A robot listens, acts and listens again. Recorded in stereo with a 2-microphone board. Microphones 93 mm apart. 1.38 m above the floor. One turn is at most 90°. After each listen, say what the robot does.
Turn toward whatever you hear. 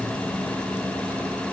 Keep listening.
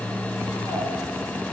Keep listening.
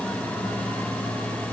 I can't make out anything.